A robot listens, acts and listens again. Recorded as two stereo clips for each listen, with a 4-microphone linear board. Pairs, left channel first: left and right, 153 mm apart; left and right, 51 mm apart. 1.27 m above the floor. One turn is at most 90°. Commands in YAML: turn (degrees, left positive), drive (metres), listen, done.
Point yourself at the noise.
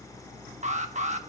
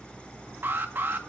turn: -50
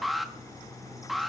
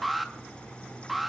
done: "Facing the alarm."